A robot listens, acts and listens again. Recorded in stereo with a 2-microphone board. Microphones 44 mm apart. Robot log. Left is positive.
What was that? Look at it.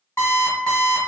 note: The alarm clock: about 75° left or 105° left.
cmd yaw +75
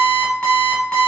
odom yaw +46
note: So it is at 30° left.
cmd yaw +30
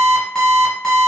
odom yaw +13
note: The alarm clock is now 15° left.
cmd yaw +15
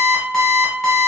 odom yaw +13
end: Facing the alarm clock, 1 to 2 m away.